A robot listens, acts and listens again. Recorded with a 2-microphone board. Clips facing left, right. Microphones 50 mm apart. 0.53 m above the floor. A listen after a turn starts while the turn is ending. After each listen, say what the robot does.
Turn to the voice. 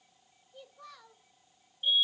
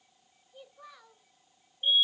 Turn 15° right.
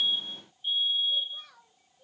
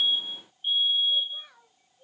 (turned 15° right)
Turn 25° right.
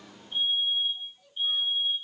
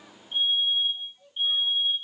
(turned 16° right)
Turn 15° right.
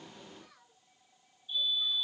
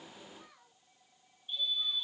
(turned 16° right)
Turn 30° right.
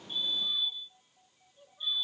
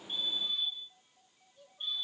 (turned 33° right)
Turn 25° left.
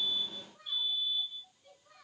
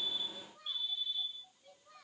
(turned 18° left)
Found it: a child speaking, straight ahead, over 4 m away.